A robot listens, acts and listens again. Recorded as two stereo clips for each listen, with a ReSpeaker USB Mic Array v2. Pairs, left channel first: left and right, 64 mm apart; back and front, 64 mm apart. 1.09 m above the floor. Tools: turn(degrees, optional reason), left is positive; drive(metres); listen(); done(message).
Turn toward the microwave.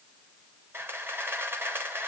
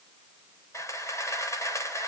listen()
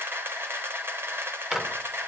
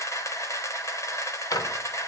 turn(degrees=-175, reason="The microwave: 175° right.")
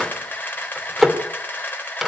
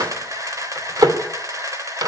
done("Facing the microwave.")